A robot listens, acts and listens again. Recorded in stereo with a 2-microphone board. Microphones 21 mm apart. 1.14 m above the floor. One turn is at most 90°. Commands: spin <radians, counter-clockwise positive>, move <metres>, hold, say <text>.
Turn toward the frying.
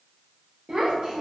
hold
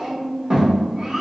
hold
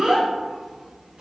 say I can't make out frying, only a child speaking.